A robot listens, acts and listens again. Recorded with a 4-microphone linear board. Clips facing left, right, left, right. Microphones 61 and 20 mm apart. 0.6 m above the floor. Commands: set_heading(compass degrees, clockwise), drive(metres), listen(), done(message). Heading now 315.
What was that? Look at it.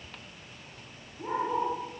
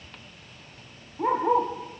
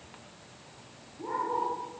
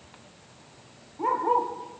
set_heading(30)
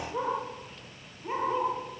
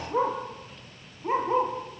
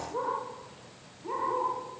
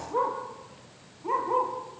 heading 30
set_heading(60)
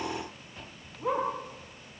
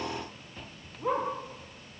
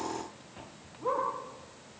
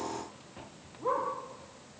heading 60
done("Facing the dog barking, over 4 m away.")